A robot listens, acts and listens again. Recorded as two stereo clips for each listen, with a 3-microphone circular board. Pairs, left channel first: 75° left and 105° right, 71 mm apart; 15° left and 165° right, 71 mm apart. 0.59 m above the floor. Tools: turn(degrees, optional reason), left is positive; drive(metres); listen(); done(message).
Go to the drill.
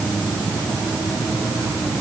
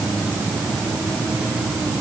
listen()
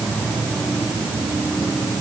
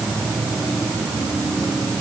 listen()
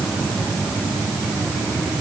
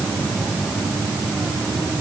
done("I can't make out a drill to turn to.")